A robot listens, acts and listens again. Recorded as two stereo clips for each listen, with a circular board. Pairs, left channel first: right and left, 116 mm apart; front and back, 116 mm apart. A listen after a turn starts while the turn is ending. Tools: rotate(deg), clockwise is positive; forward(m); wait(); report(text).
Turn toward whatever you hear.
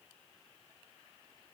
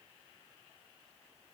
wait()
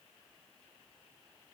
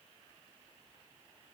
wait()
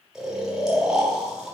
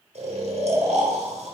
rotate(-175)
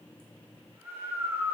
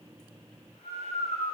rotate(-20)
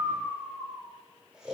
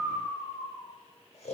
rotate(-10)
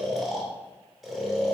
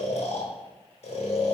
report("Facing the snoring, under 1 m away.")